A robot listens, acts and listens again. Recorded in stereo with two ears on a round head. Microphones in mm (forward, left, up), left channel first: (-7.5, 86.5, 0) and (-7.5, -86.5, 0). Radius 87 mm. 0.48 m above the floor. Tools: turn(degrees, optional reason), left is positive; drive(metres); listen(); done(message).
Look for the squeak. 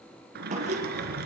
turn(degrees=-35, reason="The squeak: about 35° right or 145° right.")
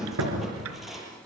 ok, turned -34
done("Found it: a squeak, straight ahead, over 4 m away.")